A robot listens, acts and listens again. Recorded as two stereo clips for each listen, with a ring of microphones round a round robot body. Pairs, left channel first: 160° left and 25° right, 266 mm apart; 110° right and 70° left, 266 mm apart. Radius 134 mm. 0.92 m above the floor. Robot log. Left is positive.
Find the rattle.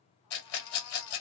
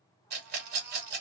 note: The rattle: 120° left.
cmd yaw +120
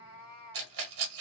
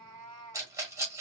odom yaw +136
note: The rattle is now 10° right.
cmd yaw -10
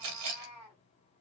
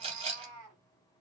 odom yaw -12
end: Found it: a rattle, straight ahead.